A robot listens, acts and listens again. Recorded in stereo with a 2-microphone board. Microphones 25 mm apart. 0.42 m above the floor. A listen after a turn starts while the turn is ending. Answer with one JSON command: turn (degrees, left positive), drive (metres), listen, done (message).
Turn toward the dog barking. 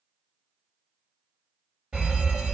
{"listen": true}
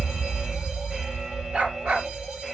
{"turn": -90}
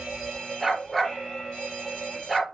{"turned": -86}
{"done": "Facing the dog barking."}